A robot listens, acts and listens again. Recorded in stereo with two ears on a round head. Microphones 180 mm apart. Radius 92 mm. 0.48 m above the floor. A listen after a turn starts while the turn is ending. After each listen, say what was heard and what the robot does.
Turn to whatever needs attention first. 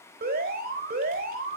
The alarm: about 45° right or 135° right. Turn 45° right.
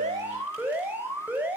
So it is at 10° right. Turn 10° right.
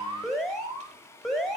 Found it: an alarm, straight ahead, 2 to 4 m away.